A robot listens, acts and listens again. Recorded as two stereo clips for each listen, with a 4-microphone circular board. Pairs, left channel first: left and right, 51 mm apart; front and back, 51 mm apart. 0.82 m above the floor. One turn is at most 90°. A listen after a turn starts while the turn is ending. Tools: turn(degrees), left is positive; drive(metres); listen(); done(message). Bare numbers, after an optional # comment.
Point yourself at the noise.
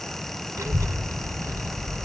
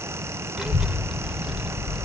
# The child speaking: 100° right.
turn(-90)
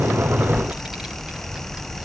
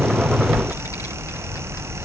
# The child speaking is now 10° right.
turn(-10)
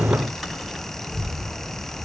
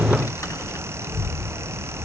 done("Facing the child speaking, over 4 m away.")